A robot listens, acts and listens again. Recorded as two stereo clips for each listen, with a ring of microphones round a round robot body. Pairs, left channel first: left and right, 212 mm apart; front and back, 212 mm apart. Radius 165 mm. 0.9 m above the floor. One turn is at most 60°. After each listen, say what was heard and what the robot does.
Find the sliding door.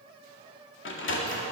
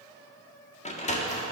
The sliding door: 60° left. Turn 60° left.
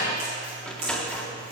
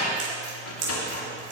Facing the sliding door, 1 to 2 m away.